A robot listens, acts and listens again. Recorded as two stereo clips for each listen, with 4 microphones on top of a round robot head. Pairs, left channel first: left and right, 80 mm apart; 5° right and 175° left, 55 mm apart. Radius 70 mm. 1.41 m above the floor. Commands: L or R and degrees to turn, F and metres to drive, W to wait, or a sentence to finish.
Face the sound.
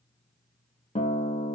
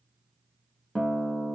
L70
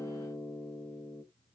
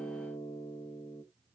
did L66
Found it: a guitar, straight ahead, 1 to 2 m away.